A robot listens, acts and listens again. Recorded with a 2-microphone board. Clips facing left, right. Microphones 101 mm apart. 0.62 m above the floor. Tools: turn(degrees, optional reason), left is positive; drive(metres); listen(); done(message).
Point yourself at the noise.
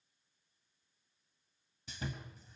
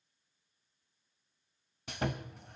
turn(degrees=-70, reason="The sawing: about 70° right or 110° right.")
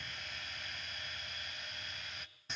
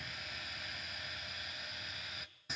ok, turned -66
done("Found it: sawing, straight ahead.")